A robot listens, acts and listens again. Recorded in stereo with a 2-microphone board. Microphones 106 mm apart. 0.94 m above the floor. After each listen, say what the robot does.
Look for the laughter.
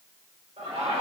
Turn 90° right.
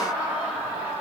Turn 20° right.
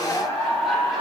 Found it: laughter, straight ahead, over 4 m away.